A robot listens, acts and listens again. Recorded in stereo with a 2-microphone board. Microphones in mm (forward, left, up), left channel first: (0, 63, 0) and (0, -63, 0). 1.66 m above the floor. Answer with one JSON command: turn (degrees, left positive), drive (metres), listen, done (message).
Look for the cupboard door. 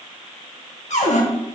{"turn": 65}
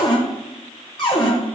{"turn": 40}
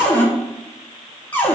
{"turn": 15}
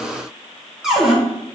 {"done": "Found it: a cupboard door, straight ahead."}